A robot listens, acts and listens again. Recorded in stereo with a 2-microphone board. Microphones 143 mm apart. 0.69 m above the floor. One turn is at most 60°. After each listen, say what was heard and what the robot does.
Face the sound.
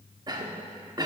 The cough: about 30° right or 150° right. Turn 30° right.
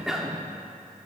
Facing the cough.